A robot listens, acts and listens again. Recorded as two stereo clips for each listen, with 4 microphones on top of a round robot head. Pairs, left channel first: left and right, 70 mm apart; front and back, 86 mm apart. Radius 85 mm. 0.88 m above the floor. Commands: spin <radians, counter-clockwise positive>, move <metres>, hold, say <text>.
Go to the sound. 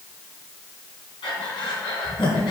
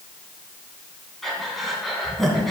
spin 1.57
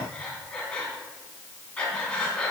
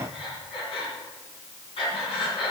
spin 0.26
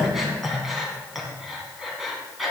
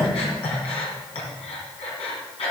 move 1.0
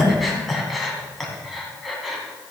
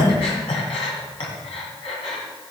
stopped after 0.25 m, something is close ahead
say Something is in my way. I am facing the breathing but have not reached it.